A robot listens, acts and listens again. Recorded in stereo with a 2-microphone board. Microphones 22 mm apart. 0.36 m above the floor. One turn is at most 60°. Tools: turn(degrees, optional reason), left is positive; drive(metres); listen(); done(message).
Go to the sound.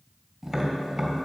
turn(degrees=-20, reason="The tapping: about 20° right or 160° right.")
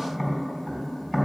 drive(metres=1.0)
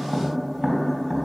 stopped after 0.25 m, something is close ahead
turn(degrees=-15, reason="The tapping is now 15° right.")
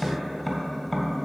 done("Something is in my way. I am facing the tapping but have not reached it.")